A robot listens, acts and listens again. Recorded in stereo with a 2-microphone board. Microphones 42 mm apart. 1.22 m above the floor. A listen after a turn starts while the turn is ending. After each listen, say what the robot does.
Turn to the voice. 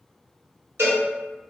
Keep listening.
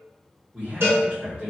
Turn 30° right.
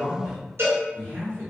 Turn 115° right.
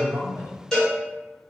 Keep listening.
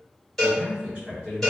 Turn 20° right.
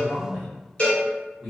Facing the man speaking.